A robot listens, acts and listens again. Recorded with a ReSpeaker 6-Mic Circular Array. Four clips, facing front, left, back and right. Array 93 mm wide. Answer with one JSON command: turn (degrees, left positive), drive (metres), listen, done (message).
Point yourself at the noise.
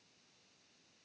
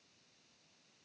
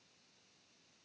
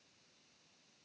{"listen": true}
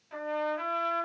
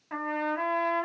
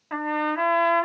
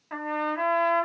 {"turn": -175}
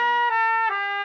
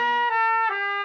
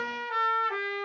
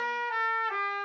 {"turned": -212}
{"turn": 40}
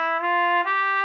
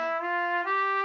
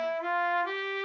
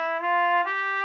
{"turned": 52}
{"turn": -15}
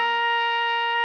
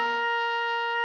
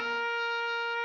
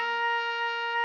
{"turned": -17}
{"done": "Facing the trumpet, under 1 m away."}